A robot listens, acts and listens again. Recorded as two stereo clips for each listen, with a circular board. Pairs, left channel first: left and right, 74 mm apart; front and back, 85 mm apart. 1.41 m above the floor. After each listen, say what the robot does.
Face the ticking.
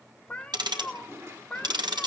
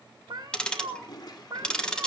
Turn 80° right.
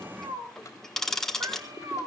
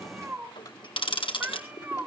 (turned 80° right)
Facing the ticking.